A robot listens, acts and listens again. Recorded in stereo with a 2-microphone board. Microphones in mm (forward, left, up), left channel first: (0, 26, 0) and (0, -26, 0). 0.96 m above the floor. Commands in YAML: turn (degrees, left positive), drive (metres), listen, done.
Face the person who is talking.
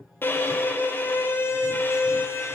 listen: true
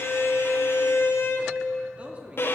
turn: -25
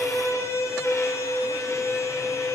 listen: true
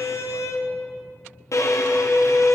listen: true
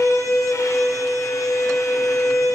done: "I heard a man speaking, but can't make it out now. It was about straight ahead or 130° right."